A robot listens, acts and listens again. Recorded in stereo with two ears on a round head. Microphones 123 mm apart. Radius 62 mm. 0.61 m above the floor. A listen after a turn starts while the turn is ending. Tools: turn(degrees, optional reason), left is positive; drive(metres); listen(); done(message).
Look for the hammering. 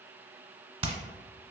turn(degrees=-40, reason="The hammering: about 40° right or 140° right.")
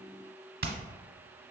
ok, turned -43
turn(degrees=-100, reason="So it is at 100° right.")
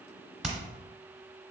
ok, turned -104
listen()
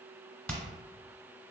done("Found it: hammering, straight ahead.")